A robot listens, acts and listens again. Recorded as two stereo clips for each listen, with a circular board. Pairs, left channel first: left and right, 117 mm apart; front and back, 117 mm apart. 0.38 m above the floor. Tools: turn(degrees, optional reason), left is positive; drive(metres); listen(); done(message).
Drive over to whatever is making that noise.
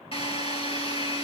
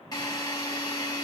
turn(degrees=55, reason="The drill: 55° left.")
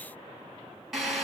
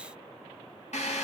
drive(metres=1.0)
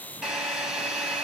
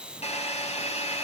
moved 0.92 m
turn(degrees=-10, reason="The drill is now 10° right.")
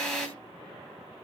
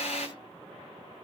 drive(metres=1.0)
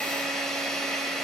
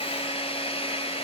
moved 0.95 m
drive(metres=1.0)
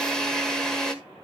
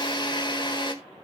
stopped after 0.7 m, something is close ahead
done("Arrived at the drill, straight ahead.")